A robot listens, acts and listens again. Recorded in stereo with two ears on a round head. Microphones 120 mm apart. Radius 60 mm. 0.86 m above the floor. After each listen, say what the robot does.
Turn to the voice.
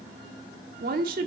Turn 90° right.
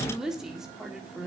Found it: a woman speaking, straight ahead, 1 to 2 m away.